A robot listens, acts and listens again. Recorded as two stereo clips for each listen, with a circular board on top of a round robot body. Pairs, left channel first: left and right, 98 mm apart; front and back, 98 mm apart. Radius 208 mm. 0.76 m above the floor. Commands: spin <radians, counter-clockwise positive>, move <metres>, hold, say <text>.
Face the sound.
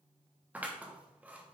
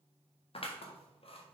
spin -0.26
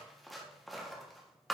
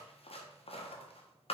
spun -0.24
say Facing the scissors.